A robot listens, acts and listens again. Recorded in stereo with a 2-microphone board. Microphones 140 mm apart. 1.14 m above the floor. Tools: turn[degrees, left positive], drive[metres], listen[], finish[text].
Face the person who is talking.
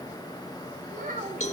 Thought: The child speaking: about 70° right or 110° right.
Action: turn[-70]
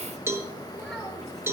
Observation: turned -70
Action: finish[Found it: a child speaking, straight ahead, over 4 m away.]